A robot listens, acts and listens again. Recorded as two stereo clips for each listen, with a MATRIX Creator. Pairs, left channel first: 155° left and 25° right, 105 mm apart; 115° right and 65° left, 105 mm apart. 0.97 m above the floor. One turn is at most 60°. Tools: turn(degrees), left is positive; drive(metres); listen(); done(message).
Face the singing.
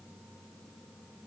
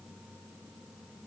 listen()
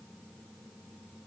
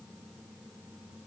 listen()
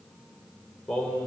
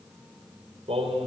turn(degrees=60)
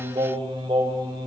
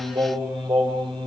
turn(degrees=30)
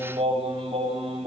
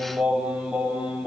turn(degrees=-10)
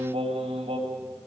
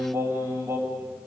done("Found it: singing, straight ahead.")